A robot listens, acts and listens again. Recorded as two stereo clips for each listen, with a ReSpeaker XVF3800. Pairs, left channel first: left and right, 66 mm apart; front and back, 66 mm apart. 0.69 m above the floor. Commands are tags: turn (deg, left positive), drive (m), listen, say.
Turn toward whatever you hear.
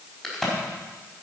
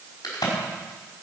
<say>Facing the crack, over 4 m away.</say>